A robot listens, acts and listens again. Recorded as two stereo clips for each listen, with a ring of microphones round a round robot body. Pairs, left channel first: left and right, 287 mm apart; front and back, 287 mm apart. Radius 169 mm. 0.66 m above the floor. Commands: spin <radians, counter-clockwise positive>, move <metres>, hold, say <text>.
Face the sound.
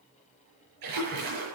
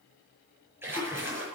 spin -1.66
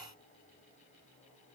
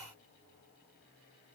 say Facing where the splash came from. I can't hear it now.